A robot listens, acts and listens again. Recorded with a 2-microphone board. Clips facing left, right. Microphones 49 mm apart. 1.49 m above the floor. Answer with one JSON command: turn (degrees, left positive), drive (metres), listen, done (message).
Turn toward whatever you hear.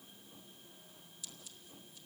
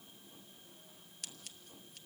{"turn": -65}
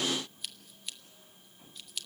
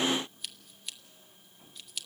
{"done": "Facing the scissors, 1 to 2 m away."}